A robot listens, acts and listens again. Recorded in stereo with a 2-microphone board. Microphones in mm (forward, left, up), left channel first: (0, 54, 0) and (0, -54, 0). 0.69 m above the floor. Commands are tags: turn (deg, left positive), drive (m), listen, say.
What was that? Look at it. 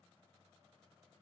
<listen/>
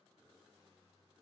<listen/>
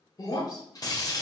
<turn deg="35"/>
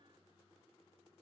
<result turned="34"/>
<listen/>
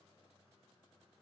<say>I heard breaking glass, but can't make it out now. It was about straight ahead or 110° left.</say>